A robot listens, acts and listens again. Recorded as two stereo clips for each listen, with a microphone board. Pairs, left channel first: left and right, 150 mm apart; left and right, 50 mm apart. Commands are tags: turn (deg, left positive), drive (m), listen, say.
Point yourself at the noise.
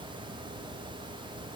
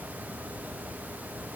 <listen/>
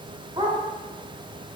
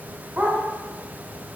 <turn deg="-30"/>
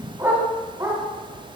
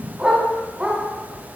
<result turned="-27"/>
<turn deg="-20"/>
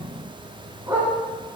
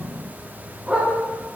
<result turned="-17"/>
<turn deg="-15"/>
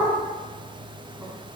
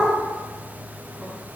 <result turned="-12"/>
<say>Facing the dog barking, 2 to 4 m away.</say>